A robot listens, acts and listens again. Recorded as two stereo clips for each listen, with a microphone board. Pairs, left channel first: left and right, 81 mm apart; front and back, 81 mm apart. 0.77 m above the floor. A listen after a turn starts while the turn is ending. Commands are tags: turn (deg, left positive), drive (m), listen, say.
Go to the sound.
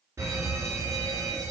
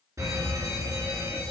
<turn deg="-140"/>
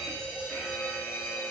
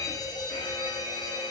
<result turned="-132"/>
<turn deg="-10"/>
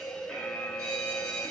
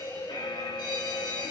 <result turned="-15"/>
<drive m="1.0"/>
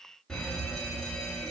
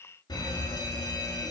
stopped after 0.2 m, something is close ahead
<turn deg="10"/>
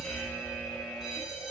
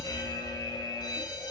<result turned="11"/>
<say>Blocked. The fire alarm is further on, straight ahead.</say>